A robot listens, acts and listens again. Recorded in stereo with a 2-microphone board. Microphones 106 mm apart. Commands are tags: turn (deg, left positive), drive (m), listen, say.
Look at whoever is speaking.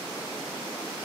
<listen/>
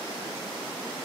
<listen/>
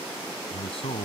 <turn deg="70"/>
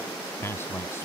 <turn deg="25"/>
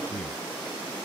<listen/>
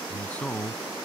<turn deg="15"/>
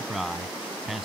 <say>Facing the man speaking.</say>